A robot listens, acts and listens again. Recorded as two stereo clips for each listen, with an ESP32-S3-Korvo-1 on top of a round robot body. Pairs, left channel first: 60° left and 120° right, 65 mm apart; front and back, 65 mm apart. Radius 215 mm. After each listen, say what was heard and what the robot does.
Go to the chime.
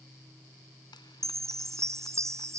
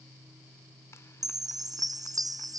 The chime: 160° right. Turn 160° right.
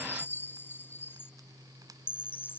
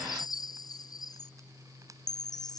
Drive 1.0 m forward.
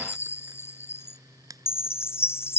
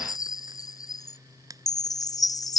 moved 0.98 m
The chime is now 10° left. Turn 10° left.
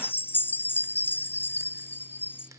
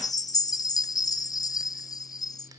Drive 1.0 m forward.
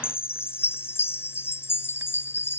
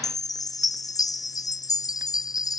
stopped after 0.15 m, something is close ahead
The chime is now 10° left. Turn 10° left.
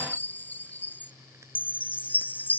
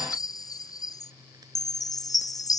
Arrived at the chime, straight ahead.